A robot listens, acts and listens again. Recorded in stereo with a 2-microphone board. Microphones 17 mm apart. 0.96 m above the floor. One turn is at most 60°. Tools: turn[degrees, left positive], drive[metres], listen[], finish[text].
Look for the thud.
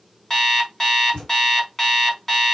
Thought: The thud: about 60° left or 120° left.
Action: turn[60]
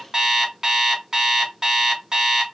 Action: listen[]
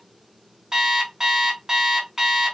Action: finish[I heard a thud, but can't make it out now. It was about straight ahead or 60° left.]